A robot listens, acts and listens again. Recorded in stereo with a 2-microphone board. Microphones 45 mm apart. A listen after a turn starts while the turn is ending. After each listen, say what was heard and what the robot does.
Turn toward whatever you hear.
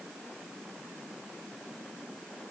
Keep listening.
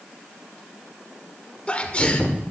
The sneeze: about 25° left or 155° left. Turn 25° left.
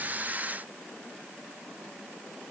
Keep listening.
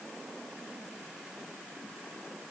I heard a sneeze, but can't make it out now. It was about straight ahead or 130° left.